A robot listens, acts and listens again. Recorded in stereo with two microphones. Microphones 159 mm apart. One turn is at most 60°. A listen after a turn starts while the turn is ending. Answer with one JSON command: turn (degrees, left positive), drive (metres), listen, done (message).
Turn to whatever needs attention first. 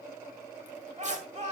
{"turn": -50}
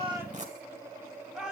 {"done": "Facing the shout, 2 to 4 m away."}